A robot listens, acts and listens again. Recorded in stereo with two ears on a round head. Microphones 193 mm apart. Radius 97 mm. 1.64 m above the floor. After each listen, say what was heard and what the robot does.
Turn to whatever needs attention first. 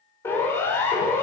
Turn 30° left.
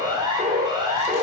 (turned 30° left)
So it is at 20° right. Turn 20° right.
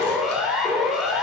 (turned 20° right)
Found it: a siren, straight ahead, over 4 m away.